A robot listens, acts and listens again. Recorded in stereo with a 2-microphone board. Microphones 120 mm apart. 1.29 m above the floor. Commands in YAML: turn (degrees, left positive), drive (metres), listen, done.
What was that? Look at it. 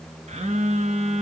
turn: -70
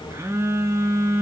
turn: -25
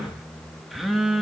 done: "Found it: a phone buzzing, straight ahead."